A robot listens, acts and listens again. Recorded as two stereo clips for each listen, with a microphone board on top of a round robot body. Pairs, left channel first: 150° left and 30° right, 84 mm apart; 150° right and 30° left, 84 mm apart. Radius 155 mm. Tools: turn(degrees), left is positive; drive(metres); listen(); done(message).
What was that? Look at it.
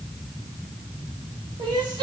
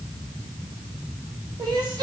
turn(degrees=-10)
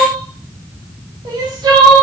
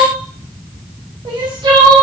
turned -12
done("Found it: crying, straight ahead, 1 to 2 m away.")